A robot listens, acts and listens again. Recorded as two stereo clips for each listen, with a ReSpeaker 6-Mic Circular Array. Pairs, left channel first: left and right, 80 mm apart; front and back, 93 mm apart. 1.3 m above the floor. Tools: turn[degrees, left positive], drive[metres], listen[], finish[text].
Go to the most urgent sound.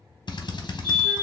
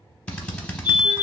Thought: The fire alarm: 90° right.
Action: turn[-90]
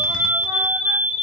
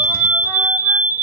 Action: drive[1.0]
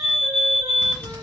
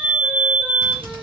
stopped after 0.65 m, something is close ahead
Thought: The fire alarm is now 10° right.
Action: turn[-10]
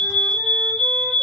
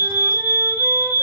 Action: finish[I am next to the fire alarm.]